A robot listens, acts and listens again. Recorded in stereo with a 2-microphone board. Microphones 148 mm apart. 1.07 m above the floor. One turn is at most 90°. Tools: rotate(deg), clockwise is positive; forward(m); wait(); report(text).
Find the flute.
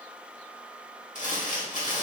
wait()
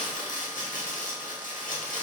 wait()
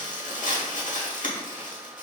report("I can't make out a flute, only crumpling.")